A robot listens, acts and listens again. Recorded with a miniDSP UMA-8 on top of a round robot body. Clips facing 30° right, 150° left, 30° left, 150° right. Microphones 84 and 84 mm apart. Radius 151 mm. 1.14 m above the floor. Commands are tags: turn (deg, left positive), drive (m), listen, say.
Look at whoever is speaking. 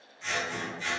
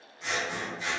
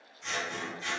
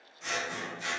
<listen/>
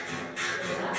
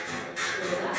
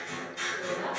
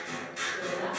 <turn deg="-65"/>
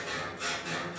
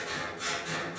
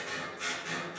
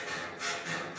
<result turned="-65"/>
<listen/>
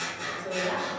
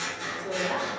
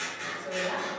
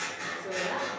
<turn deg="10"/>
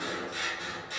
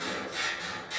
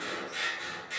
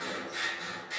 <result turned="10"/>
<listen/>
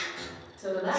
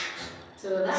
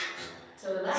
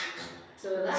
<say>Facing the woman speaking, 1 to 2 m away.</say>